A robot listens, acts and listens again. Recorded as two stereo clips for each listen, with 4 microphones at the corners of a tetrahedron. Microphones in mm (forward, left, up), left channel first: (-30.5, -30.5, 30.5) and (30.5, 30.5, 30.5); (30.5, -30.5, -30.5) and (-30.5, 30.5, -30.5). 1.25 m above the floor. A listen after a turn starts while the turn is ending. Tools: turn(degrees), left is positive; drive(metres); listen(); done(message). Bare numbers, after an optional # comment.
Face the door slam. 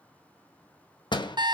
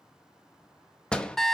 # The door slam: 125° right.
turn(-125)
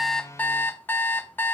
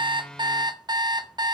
done("I heard a door slam from this way, but can't make it out now.")